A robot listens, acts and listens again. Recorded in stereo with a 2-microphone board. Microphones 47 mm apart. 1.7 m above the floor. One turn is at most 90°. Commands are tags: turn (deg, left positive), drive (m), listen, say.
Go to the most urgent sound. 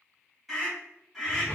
<turn deg="-30"/>
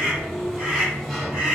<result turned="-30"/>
<turn deg="-90"/>
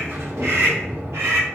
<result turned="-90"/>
<turn deg="-60"/>
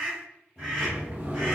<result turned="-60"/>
<drive m="1.0"/>
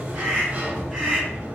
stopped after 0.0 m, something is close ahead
<say>Something is in my way. I am facing the scream but have not reached it.</say>